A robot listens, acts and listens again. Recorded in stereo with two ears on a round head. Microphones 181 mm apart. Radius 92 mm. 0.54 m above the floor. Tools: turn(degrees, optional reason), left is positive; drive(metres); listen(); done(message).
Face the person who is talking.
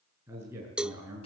turn(degrees=-30)
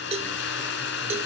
listen()
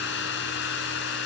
listen()
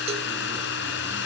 done("I heard a man speaking, but can't make it out now. It was about 15° left or 135° right.")